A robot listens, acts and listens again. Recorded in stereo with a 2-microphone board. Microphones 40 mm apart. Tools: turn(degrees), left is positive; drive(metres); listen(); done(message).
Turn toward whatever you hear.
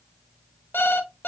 turn(degrees=70)
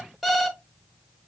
done("Facing the alarm clock.")